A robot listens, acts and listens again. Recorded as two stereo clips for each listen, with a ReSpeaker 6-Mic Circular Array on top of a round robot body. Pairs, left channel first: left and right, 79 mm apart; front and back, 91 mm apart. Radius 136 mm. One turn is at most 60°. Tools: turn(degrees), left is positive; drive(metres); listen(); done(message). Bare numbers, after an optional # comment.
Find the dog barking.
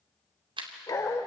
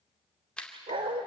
# The dog barking: 150° left.
turn(60)
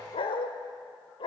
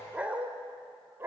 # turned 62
# The dog barking is now 115° left.
turn(60)
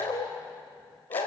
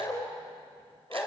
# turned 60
# The dog barking is now 65° left.
turn(60)
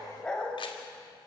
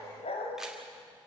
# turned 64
# The dog barking is now 10° left.
turn(10)
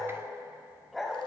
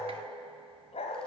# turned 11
done("Facing the dog barking, 2 to 4 m away.")